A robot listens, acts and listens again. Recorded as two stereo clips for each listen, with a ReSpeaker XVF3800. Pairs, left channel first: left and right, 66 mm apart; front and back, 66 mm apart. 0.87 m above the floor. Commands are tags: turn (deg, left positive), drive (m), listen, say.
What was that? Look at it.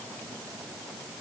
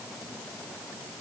<listen/>
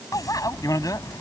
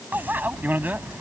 <turn deg="120"/>
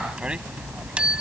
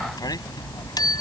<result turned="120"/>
<turn deg="-15"/>
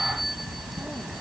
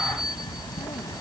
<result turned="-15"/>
<say>Facing the bicycle bell.</say>